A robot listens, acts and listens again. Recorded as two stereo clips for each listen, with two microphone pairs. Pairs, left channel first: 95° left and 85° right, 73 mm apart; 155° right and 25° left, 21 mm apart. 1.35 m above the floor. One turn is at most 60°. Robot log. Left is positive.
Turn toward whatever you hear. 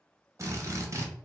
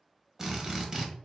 note: The drill: 40° right.
cmd yaw -40
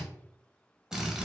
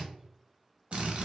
end: Found it: a drill, straight ahead, under 1 m away.